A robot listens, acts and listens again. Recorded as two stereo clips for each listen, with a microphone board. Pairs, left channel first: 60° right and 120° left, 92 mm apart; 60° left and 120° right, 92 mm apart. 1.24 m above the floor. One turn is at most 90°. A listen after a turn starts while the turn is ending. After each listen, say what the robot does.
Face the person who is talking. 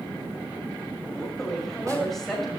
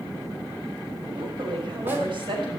Turn 90° right.
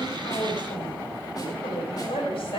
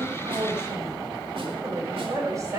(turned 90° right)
Turn 65° right.
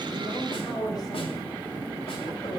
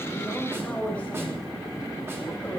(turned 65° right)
Turn 15° right.
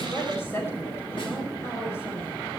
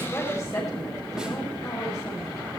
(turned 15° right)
Found it: a woman speaking, straight ahead.